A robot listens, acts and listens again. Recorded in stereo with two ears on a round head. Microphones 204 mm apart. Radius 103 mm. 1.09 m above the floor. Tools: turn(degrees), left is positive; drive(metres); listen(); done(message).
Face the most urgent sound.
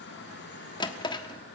listen()
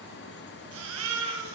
turn(degrees=-65)
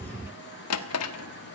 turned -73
listen()
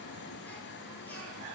listen()
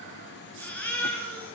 done("Facing the baby crying, over 4 m away.")